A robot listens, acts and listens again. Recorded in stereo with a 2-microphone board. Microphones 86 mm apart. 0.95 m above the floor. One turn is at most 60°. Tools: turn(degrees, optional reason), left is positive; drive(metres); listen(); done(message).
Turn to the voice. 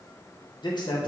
turn(degrees=60, reason="The man speaking: about 60° left or 120° left.")
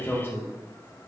turn(degrees=30, reason="So it is at 30° left.")
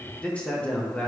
turn(degrees=20, reason="The man speaking is now 20° left.")
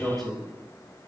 done("Facing the man speaking.")